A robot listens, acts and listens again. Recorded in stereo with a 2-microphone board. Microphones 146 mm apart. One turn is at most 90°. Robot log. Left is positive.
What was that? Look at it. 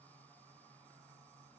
cmd idle
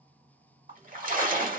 cmd yaw -90
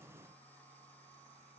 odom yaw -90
end: I heard a splash from this way, but can't make it out now.